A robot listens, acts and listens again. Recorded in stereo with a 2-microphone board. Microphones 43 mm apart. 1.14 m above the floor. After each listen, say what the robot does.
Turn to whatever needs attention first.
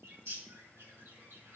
Keep listening.
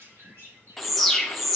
Turn 30° left.
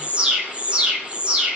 Turn 25° right.
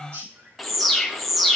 Found it: an alarm, straight ahead.